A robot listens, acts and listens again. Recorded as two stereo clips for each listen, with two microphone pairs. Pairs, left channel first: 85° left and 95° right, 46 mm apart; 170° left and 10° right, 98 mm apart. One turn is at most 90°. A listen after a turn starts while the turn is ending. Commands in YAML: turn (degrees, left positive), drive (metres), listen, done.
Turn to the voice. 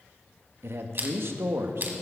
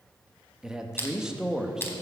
turn: -90
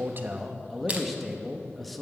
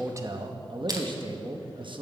done: "Found it: a man speaking, straight ahead, under 1 m away."